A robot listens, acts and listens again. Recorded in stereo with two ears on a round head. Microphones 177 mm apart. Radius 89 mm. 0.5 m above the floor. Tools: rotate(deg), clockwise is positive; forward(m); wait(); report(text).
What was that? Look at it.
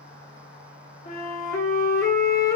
rotate(-20)
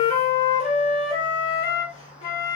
rotate(-140)
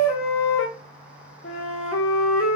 rotate(-65)
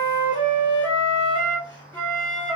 rotate(-10)
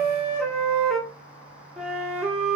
report("Found it: a flute, straight ahead, 1 to 2 m away.")